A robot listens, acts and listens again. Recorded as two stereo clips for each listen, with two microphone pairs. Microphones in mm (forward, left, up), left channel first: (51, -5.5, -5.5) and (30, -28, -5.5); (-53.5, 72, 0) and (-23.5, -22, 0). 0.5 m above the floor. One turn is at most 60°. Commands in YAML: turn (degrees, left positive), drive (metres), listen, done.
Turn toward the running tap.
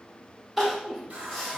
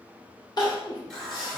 turn: -60
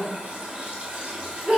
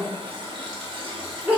turn: -60
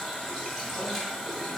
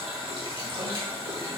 turn: -45
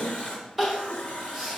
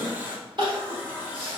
done: "Found it: a running tap, straight ahead, 1 to 2 m away."